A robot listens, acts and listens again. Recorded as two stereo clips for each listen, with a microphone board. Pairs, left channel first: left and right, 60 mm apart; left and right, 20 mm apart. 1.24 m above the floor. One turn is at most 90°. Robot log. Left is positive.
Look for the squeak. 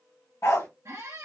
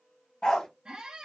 note: The squeak: about 60° right or 120° right.
cmd yaw -60
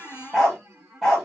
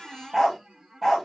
note: So it is at 60° right.
cmd yaw -60
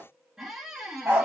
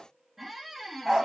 note: The squeak is now 10° right.
cmd yaw -10
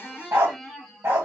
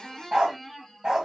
end: Found it: a squeak, straight ahead, under 1 m away.